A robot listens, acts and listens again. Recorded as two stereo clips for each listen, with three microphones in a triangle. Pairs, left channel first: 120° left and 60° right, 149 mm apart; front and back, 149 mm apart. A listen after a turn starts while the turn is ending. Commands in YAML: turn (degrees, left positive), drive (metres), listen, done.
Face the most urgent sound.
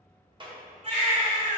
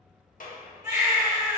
turn: -110
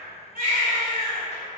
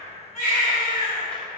turn: -20
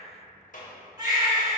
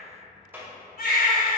done: "Found it: a baby crying, straight ahead, 1 to 2 m away."